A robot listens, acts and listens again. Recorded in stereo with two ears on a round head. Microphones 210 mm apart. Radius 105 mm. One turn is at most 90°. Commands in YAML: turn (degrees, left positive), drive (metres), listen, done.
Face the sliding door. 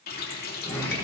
turn: 30
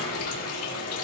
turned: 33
turn: 90
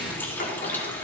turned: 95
turn: 40
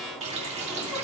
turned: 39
done: "Facing the sliding door, over 4 m away."